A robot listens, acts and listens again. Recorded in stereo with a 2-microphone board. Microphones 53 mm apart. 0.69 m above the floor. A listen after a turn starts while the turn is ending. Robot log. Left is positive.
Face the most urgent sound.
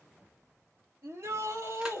note: The shout: about 55° right or 125° right.
cmd yaw -55
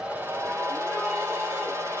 cmd idle
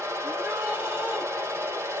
cmd idle
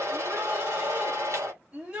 note: So it is at 15° right.
cmd yaw -15
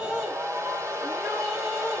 cmd idle
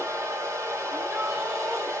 cmd idle
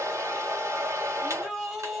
end: Found it: a shout, straight ahead.